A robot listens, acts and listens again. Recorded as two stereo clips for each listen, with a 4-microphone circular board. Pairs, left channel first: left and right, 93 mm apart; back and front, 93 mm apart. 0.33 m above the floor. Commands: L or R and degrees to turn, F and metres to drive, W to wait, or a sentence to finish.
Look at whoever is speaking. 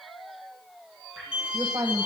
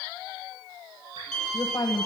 R135
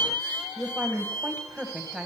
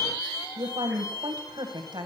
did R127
R10
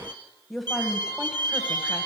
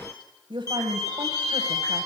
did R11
Facing the woman speaking.